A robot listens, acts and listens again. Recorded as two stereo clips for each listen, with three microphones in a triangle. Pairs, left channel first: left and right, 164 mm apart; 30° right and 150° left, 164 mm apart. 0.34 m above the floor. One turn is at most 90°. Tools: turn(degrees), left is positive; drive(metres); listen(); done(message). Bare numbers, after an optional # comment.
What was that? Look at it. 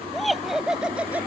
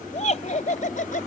# The laughter: 10° right.
turn(-10)
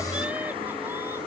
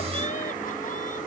listen()
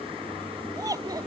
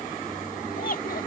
# The laughter is now 25° right.
turn(-25)
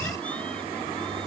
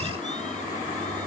listen()
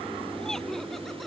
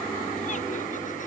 listen()
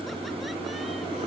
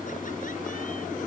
done("I heard laughter from this way, but can't make it out now.")